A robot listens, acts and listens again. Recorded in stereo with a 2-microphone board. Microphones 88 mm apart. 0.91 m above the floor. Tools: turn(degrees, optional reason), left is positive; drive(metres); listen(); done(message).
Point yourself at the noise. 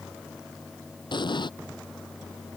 turn(degrees=60, reason="The explosion: about 60° left or 120° left.")
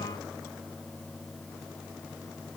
listen()
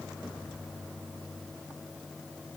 done("I heard an explosion, but can't make it out now. It was about straight ahead or 60° left.")